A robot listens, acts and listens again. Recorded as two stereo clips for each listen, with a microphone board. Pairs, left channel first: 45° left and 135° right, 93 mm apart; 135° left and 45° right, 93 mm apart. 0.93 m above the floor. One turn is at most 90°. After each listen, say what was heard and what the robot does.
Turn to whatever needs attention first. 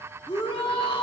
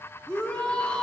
The shout: 55° left. Turn 55° left.
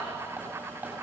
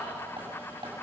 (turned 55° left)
Keep listening.
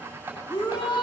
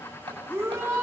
The shout is now 15° left. Turn 15° left.
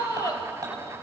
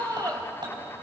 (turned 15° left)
Found it: a shout, straight ahead, 2 to 4 m away.